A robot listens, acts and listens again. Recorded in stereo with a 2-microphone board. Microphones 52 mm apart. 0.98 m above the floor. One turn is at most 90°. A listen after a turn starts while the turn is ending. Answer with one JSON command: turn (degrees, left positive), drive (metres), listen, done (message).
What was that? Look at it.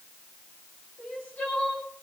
{"turn": 30}
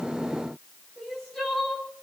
{"done": "Found it: crying, straight ahead, over 4 m away."}